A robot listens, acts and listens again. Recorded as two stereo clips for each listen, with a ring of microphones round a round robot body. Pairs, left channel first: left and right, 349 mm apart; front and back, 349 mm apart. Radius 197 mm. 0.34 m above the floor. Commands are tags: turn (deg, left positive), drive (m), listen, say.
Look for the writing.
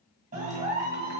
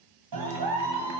<listen/>
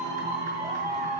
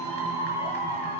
<listen/>
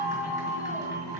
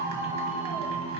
<say>I can't make out writing, only a clap.</say>